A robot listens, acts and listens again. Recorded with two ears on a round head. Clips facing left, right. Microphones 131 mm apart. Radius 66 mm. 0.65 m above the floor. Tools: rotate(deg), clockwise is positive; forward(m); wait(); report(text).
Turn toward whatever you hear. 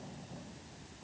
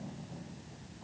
wait()
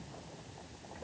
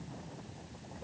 wait()
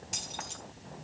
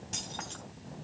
rotate(-30)
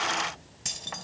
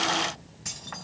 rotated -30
rotate(-150)
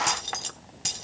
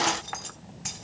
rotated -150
rotate(-35)
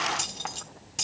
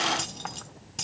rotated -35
report("Facing the keys jangling.")